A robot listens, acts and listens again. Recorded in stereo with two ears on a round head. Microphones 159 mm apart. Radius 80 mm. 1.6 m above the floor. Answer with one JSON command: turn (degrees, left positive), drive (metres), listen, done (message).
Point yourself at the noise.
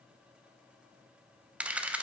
{"turn": -30}
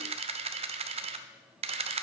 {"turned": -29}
{"turn": -145}
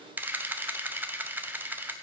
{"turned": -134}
{"turn": -10}
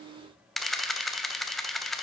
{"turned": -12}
{"done": "Facing the camera shutter."}